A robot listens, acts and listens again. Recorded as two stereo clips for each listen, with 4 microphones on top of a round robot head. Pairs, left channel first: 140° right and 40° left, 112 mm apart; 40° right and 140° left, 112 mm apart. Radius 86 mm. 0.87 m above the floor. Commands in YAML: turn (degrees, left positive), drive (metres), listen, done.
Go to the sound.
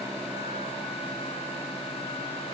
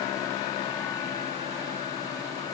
listen: true
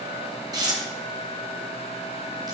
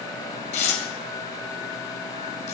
turn: -15
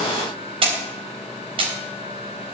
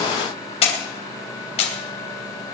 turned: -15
drive: 1.0
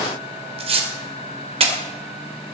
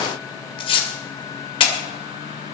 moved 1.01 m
drive: 1.0
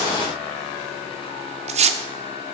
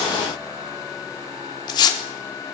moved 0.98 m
turn: 15
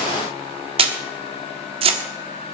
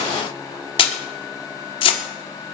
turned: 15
drive: 1.0
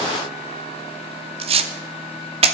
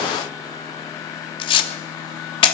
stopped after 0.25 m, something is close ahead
done: "I am next to the tearing paper."